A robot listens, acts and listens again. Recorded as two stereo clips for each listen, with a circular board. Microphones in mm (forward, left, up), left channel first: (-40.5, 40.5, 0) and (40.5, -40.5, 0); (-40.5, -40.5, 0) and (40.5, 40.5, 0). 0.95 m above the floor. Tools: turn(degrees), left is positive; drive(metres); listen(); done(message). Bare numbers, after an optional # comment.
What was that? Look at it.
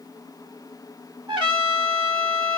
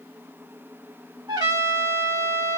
done("Facing the trumpet, 1 to 2 m away.")